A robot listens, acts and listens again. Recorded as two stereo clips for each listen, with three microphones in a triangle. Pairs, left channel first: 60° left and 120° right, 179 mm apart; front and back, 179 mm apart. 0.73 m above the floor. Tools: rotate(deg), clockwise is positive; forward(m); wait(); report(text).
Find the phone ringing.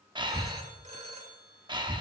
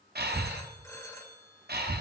rotate(70)
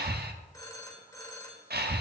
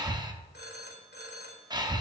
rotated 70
rotate(10)
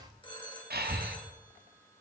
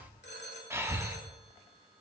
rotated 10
report("Found it: a phone ringing, straight ahead.")